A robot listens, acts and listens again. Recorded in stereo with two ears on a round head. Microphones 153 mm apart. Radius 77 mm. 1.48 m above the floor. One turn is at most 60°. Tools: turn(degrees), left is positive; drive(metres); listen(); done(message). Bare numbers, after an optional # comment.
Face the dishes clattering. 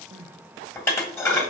turn(30)
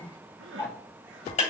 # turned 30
# So it is at 140° left.
turn(60)
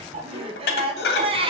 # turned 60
# The dishes clattering is now 70° left.
turn(60)
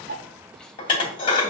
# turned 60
# The dishes clattering is now 30° left.
turn(30)
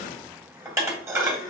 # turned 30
# The dishes clattering is now 15° right.
turn(-15)
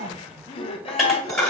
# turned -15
done("Found it: dishes clattering, straight ahead, 1 to 2 m away.")